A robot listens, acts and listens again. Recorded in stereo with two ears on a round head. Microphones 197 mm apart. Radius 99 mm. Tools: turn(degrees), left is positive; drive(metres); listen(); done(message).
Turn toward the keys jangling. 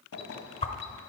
turn(degrees=90)
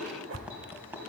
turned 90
turn(degrees=-10)
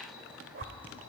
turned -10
done("Found it: keys jangling, straight ahead, 2 to 4 m away.")